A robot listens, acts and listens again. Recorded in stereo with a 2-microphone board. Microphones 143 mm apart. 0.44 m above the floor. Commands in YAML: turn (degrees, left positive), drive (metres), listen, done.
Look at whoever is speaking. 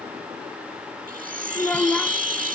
turn: 30
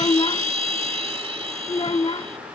turn: 140
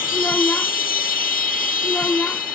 turn: 10
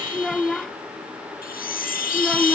done: "Found it: a child speaking, straight ahead."